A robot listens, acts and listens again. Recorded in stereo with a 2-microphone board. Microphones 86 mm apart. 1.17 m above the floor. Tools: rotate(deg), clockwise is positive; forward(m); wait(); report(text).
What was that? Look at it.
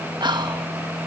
rotate(60)
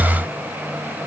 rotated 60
wait()
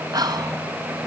rotate(55)
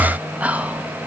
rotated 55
rotate(20)
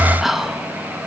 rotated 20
report("Facing the whispering, 1 to 2 m away.")